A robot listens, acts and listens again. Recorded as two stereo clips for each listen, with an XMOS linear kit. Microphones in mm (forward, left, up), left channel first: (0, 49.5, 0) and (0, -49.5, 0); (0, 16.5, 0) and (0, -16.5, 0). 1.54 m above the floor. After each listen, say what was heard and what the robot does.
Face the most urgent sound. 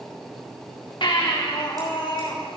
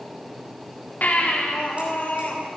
The baby crying: about 60° left or 120° left. Turn 60° left.
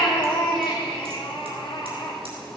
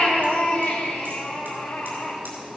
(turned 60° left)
So it is at 60° left. Turn 60° left.
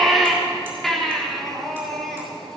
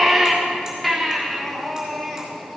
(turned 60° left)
Found it: a baby crying, straight ahead.